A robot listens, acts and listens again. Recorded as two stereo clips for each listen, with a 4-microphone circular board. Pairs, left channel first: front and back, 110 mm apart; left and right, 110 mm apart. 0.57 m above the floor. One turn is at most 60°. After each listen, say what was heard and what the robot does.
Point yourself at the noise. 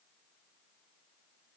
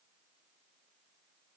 Keep listening.
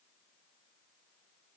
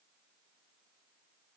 Keep listening.
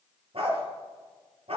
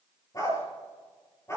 The dog barking: 155° left. Turn 60° left.
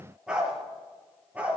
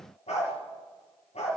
The dog barking is now 105° left. Turn 60° left.
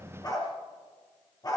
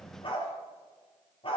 The dog barking is now 55° left. Turn 55° left.
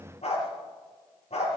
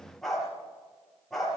Facing the dog barking.